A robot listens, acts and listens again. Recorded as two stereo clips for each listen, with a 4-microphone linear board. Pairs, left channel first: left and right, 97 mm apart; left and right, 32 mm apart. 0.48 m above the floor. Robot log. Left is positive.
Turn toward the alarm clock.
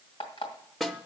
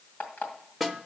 note: The alarm clock: about 75° left or 105° left.
cmd yaw +75
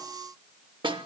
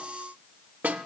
cmd idle
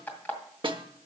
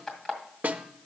note: So it is at 20° left.
cmd yaw +20
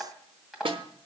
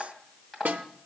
end: Found it: an alarm clock, straight ahead, 2 to 4 m away.